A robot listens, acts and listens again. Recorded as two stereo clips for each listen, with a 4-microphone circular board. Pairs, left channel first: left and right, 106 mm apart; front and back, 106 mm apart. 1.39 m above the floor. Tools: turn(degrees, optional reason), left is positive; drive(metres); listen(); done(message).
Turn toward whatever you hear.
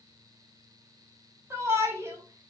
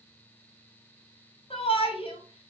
turn(degrees=-25, reason="The shout: 25° right.")
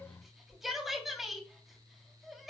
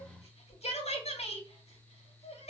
done("Found it: a shout, straight ahead.")